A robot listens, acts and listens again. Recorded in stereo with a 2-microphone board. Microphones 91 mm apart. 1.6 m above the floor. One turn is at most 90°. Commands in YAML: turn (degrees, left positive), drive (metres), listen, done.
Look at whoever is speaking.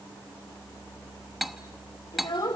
turn: 60
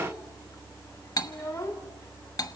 turn: 40
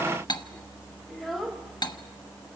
done: "Found it: a child speaking, straight ahead, 1 to 2 m away."